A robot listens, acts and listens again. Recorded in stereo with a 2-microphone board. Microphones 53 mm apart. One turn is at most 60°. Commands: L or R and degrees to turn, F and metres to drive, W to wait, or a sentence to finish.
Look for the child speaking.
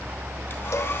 W
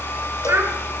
R50
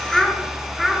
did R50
Found it: a child speaking, straight ahead, over 4 m away.